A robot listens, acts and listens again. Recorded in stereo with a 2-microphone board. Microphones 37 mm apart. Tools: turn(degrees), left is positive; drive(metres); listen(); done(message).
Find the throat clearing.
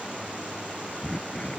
turn(degrees=25)
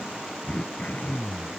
turn(degrees=135)
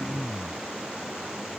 turn(degrees=20)
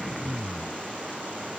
done("Found it: throat clearing, straight ahead.")